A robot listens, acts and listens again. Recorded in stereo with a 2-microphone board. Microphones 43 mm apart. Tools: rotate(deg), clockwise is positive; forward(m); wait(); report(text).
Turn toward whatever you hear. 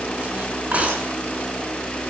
rotate(30)
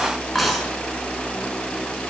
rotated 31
report("Facing the cutlery clinking.")